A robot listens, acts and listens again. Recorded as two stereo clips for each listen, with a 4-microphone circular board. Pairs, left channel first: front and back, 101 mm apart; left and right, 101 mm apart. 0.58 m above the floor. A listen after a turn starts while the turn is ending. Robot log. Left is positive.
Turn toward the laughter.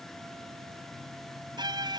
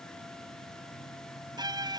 cmd idle
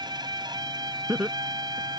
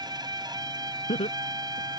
note: The laughter: 100° left.
cmd yaw +100
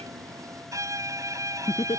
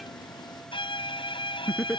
end: Found it: laughter, straight ahead.